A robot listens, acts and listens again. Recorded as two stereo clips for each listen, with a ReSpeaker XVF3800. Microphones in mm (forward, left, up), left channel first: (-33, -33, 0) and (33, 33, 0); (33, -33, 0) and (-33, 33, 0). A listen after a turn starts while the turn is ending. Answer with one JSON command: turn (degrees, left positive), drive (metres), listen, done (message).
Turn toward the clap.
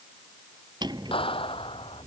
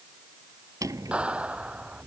{"turn": -145}
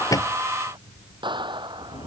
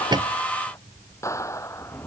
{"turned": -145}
{"turn": 15}
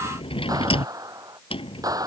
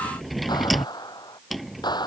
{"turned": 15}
{"done": "Facing the clap."}